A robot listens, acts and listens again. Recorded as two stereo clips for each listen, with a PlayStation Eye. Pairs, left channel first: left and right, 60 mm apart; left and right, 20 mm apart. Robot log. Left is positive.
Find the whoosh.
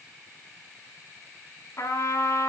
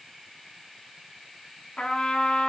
cmd idle
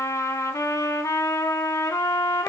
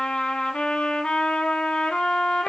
cmd idle
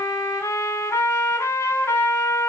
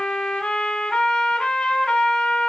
end: I can't make out a whoosh to turn to.